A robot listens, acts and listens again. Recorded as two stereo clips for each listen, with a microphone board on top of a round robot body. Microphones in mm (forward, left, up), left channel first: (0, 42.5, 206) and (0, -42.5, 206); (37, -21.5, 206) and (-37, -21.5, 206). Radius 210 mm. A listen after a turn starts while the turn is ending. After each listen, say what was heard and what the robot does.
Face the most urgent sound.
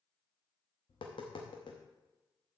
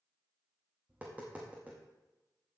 Keep listening.
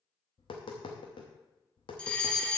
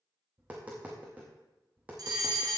The fire alarm: 165° left. Turn 165° left.
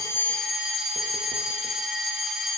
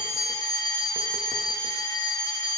Facing the fire alarm, 1 to 2 m away.